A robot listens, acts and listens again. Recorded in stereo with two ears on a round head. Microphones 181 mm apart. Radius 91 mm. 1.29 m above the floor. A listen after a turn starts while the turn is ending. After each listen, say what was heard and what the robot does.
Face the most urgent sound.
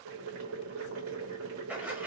Keep listening.
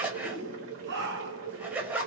The shout: about 55° right or 125° right. Turn 55° right.
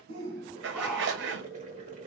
Found it: a shout, straight ahead, 1 to 2 m away.